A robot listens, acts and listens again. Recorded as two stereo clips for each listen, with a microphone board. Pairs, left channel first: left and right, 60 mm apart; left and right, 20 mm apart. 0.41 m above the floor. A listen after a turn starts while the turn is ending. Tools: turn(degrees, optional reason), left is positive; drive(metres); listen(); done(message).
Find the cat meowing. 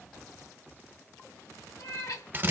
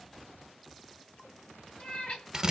turn(degrees=70, reason="The cat meowing: about 70° left or 110° left.")
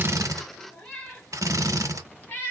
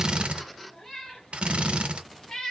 turn(degrees=30, reason="So it is at 30° left.")
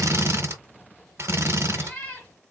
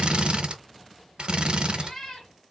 turn(degrees=25, reason="The cat meowing is now 25° left.")
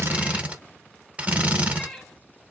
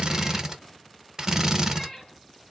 done("Found it: a cat meowing, straight ahead.")